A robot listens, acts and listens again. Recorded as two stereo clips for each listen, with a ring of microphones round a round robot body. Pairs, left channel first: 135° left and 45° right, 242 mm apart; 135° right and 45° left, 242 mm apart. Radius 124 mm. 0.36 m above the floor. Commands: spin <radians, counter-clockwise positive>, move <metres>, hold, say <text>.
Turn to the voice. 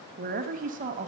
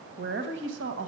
spin 0.26
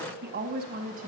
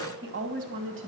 spin 0.17
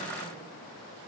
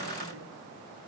hold
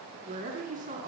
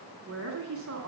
spin 0.26
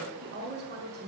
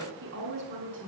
say Found it: a woman speaking, straight ahead, 2 to 4 m away.